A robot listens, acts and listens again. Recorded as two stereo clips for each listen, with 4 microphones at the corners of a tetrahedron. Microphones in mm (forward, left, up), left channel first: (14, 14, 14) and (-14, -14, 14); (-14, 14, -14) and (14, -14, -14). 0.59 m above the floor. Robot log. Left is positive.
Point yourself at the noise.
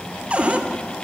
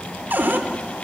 note: The cupboard door: 80° right.
cmd yaw -80
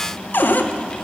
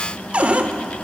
note: The cupboard door is now 10° left.
cmd yaw +10
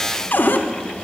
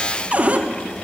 end: Facing the cupboard door.